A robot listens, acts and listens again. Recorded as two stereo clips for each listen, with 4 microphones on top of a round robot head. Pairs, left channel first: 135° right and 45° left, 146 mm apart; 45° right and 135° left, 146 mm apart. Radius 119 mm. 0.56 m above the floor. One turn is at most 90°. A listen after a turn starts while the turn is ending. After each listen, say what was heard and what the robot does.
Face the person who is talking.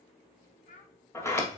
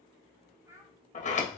The child speaking: 155° right. Turn 90° right.
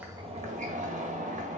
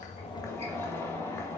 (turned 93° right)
Nothing new. It was at 60° right. Turn 60° right.
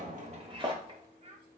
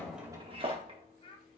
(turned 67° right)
Facing the child speaking.